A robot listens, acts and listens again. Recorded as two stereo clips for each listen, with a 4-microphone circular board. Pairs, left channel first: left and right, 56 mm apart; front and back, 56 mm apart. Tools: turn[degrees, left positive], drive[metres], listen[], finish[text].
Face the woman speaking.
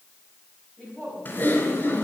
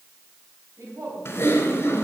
Thought: The woman speaking: 170° left.
Action: turn[170]
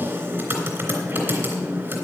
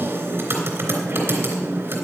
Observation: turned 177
Thought: Nothing new. It was at 10° right.
Action: turn[-10]
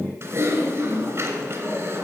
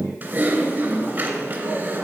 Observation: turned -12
Action: listen[]
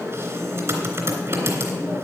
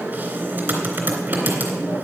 Action: finish[Facing where the woman speaking came from. I can't hear it now.]